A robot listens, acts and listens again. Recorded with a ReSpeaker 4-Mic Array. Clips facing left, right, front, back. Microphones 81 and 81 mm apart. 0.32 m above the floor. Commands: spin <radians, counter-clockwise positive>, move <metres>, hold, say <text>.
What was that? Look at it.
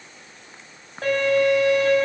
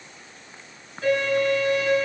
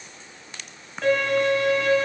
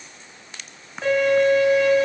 spin 1.83
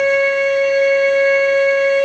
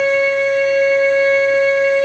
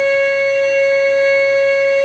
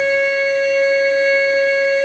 say Facing the violin.